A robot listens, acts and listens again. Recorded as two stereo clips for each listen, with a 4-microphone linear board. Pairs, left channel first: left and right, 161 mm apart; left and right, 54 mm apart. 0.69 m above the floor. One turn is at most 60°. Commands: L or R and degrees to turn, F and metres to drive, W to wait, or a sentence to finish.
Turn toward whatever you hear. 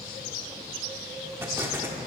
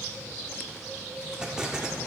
R30
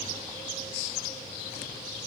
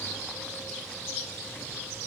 W
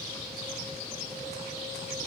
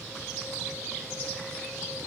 I heard an explosion, but can't make it out now. It was about 15° left or 135° right.